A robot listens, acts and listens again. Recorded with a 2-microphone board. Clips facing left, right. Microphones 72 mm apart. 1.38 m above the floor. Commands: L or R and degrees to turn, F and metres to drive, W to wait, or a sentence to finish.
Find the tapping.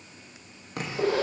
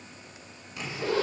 L55
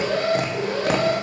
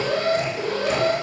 L70
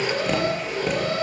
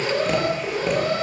W
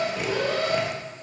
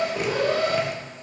W
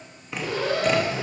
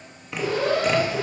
Facing the tapping, 2 to 4 m away.